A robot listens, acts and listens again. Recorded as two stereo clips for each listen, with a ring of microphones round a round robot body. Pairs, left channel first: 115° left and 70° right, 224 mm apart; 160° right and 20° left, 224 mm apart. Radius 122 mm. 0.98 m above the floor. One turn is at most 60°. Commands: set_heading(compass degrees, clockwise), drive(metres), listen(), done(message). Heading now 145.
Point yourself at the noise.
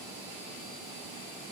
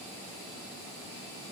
listen()
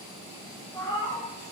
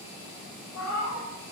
set_heading(205)
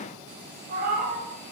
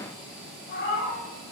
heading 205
set_heading(265)
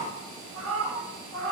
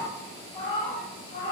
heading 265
set_heading(325)
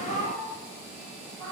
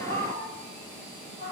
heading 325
set_heading(0)
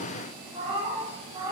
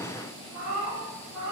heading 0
done("Found it: a cat meowing, straight ahead.")